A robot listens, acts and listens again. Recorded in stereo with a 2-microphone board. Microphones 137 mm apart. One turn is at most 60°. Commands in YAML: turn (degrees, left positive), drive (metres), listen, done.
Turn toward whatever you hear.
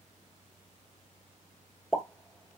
turn: -30
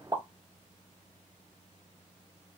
turn: -60
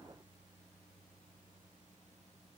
turn: -60
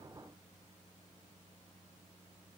turn: -25
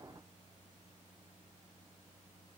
done: "Facing where the pop came from. I can't hear it now."